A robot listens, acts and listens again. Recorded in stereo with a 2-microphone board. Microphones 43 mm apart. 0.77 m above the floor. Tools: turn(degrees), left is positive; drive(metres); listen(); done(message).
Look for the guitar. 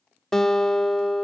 turn(degrees=30)
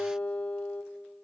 turn(degrees=145)
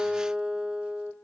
turn(degrees=-25)
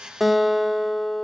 done("Found it: a guitar, straight ahead.")